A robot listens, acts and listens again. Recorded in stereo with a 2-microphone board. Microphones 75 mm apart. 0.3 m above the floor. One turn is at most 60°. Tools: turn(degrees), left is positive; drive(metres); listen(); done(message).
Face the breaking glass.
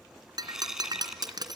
turn(degrees=-60)
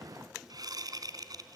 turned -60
listen()
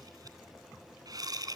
done("I heard breaking glass, but can't make it out now. It was about straight ahead or 60° right.")